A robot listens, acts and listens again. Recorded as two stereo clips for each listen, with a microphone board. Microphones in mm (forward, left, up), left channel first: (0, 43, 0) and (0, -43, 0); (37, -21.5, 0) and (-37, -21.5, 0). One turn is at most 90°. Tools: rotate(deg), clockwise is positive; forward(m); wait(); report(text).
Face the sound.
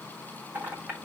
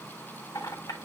rotate(20)
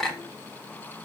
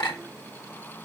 report("Facing the clink.")